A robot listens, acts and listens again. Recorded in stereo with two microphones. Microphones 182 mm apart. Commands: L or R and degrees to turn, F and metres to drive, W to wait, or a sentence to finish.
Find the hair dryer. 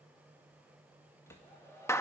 L15
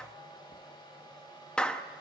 L155
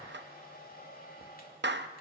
L55
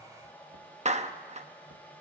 L10
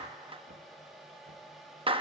Found it: a hair dryer, straight ahead, 2 to 4 m away.